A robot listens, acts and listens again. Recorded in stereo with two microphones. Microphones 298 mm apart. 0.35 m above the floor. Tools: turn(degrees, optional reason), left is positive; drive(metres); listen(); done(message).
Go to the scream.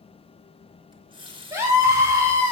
turn(degrees=-30)
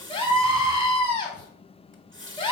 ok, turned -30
turn(degrees=20, reason="So it is at 20° left.")
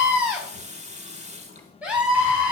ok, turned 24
drive(metres=1.0)
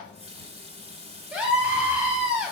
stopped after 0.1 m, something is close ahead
done("Something is in my way. I am facing the scream but have not reached it.")